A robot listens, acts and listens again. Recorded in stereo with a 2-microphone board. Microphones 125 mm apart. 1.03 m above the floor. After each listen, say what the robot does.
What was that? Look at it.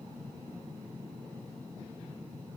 Keep listening.
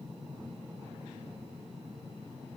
Keep listening.
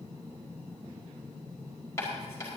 Turn 20° left.
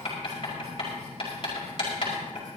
Turn 135° left.
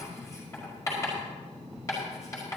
Turn 25° left.
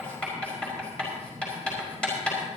Turn 10° left.
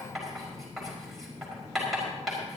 Found it: writing, straight ahead.